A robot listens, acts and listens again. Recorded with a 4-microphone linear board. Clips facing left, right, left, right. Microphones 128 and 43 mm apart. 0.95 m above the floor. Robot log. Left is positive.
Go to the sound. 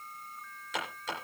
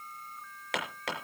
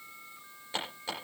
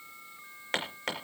note: The hammering: about 70° right or 110° right.
cmd yaw -70
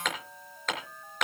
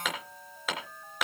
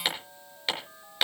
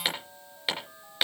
cmd fwd 1.0
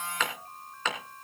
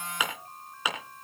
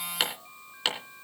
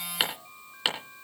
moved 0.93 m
note: The hammering is now 10° right.
cmd yaw -10
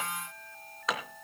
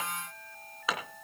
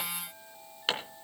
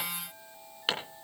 cmd fwd 1.0
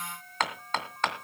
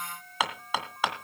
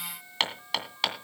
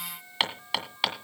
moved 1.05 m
note: The hammering is now 10° right.
cmd yaw -10
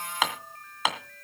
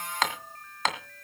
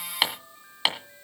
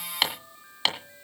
cmd fwd 1.0
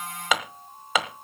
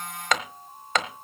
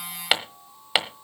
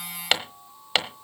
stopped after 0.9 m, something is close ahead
end: I am next to the hammering.